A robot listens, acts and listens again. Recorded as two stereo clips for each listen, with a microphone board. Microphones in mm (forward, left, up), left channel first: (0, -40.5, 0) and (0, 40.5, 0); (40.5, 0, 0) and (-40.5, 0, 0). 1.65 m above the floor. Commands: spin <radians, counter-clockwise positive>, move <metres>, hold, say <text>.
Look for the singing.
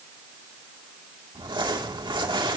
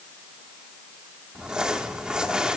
hold
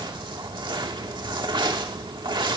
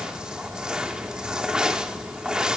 hold
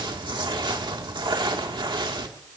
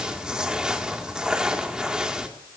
say I can't make out singing, only crumpling.